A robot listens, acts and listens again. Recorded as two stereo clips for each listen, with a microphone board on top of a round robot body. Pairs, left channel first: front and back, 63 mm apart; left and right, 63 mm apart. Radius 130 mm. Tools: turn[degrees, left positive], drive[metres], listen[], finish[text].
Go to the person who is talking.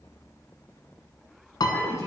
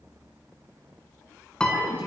Thought: The woman speaking: 30° right.
Action: turn[-30]
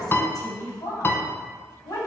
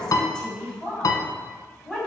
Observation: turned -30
Thought: The woman speaking is now 15° left.
Action: turn[15]
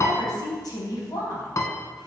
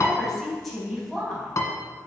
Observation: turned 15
Action: drive[1.0]
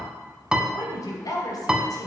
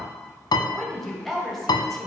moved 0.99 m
Action: drive[1.0]
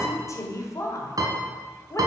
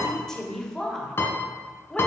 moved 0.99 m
Thought: The woman speaking is now 10° left.
Action: turn[10]
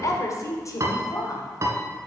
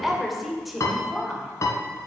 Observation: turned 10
Action: drive[1.0]
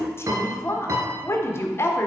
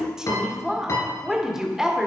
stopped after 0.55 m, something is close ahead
Thought: The woman speaking is now 10° right.
Action: turn[-10]
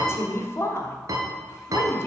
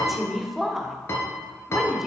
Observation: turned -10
Action: finish[I am next to the woman speaking.]